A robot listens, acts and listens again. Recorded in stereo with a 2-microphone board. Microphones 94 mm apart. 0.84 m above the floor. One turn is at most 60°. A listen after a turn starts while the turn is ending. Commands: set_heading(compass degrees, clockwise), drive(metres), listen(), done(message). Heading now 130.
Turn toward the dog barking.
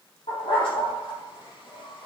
set_heading(70)
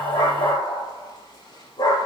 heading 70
set_heading(20)
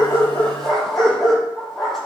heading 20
done("Facing the dog barking.")